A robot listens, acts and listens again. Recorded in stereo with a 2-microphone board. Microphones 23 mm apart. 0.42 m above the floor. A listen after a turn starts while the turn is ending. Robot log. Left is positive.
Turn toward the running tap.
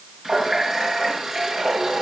note: The running tap: about 20° right or 160° right.
cmd yaw -20
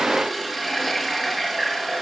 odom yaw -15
end: Found it: a running tap, straight ahead.